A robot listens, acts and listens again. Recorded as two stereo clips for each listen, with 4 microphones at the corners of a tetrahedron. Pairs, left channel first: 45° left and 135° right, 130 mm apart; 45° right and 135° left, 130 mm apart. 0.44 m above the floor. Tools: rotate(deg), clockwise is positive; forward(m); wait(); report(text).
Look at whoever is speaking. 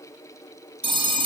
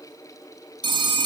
wait()
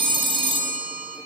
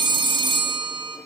wait()
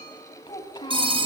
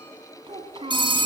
rotate(-95)
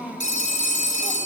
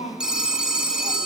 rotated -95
rotate(45)
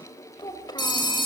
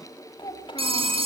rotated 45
report("Facing the child speaking, 2 to 4 m away.")